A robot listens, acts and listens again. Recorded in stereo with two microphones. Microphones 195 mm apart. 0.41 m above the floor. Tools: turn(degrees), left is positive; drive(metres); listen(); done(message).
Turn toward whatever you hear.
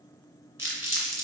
turn(degrees=-30)
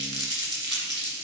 turn(degrees=20)
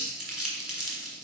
done("Facing the crumpling, 2 to 4 m away.")